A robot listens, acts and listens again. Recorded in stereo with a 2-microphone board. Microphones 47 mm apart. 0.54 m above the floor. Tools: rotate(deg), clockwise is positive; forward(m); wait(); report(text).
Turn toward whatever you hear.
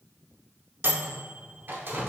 rotate(45)
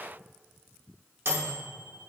rotate(75)
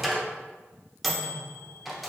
report("Found it: a microwave, straight ahead, under 1 m away.")